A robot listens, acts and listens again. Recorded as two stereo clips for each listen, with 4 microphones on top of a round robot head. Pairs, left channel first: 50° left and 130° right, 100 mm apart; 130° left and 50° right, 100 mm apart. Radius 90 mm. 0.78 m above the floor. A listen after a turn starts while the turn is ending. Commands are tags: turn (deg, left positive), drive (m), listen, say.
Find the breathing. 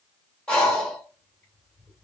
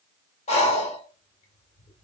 <turn deg="130"/>
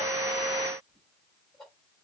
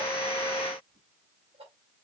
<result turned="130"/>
<listen/>
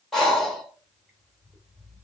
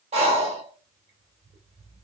<turn deg="-35"/>
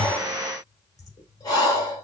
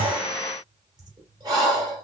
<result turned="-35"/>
<say>Found it: breathing, straight ahead, 2 to 4 m away.</say>